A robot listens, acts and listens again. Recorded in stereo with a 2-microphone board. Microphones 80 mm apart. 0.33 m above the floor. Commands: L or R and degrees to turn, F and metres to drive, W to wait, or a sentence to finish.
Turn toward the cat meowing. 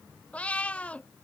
L15
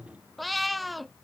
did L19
Found it: a cat meowing, straight ahead.